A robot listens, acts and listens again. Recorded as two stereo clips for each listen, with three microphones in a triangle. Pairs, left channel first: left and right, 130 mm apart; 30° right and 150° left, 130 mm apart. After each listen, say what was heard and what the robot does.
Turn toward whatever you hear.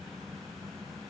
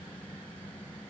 Keep listening.
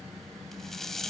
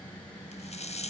Facing the rattle.